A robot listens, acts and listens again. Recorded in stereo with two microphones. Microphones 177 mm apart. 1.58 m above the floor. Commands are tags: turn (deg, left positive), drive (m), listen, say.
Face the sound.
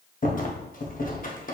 <turn deg="50"/>
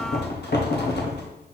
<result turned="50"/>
<turn deg="75"/>
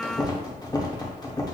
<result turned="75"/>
<turn deg="25"/>
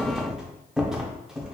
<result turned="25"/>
<say>Facing the rattle, under 1 m away.</say>